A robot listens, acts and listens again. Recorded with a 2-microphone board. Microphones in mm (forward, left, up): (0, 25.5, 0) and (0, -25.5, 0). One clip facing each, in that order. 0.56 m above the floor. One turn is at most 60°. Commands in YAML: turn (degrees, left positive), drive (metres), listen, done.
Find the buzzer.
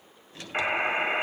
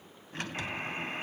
turn: 55
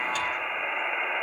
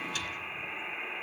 turn: 55
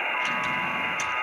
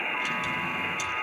turn: 15
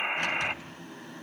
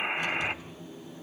done: "Found it: a buzzer, straight ahead, under 1 m away."